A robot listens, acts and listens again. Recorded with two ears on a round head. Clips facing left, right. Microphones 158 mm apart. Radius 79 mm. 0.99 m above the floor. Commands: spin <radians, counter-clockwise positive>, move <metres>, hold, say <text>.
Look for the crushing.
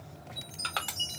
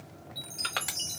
spin -0.44
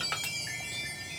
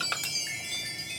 hold
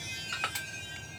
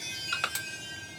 spin -2.27
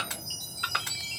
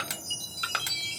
spin -0.96
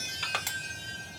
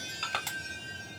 spin 0.26
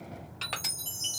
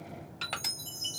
say Found it: crushing, straight ahead.